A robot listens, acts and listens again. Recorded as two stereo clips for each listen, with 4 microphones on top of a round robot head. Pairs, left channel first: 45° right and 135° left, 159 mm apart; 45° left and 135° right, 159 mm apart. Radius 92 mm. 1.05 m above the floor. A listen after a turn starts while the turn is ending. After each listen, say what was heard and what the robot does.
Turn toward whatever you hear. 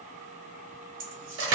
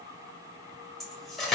The cutlery clinking: 135° left. Turn 135° left.
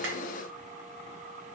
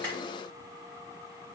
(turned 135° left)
Keep listening.
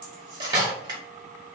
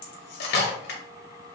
The cutlery clinking is now 70° left. Turn 70° left.
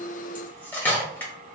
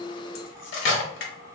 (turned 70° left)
The cutlery clinking is now 35° left. Turn 35° left.
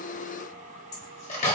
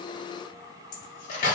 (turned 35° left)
Facing the cutlery clinking, under 1 m away.